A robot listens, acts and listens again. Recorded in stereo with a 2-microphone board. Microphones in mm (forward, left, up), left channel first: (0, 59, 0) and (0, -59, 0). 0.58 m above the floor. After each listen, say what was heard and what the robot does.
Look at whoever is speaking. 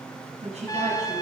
The woman speaking: about 60° right or 120° right. Turn 60° right.
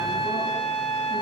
Keep listening.
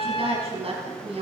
So it is at 55° right. Turn 55° right.
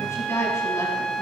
The woman speaking is now 25° left. Turn 25° left.
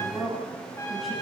Found it: a woman speaking, straight ahead.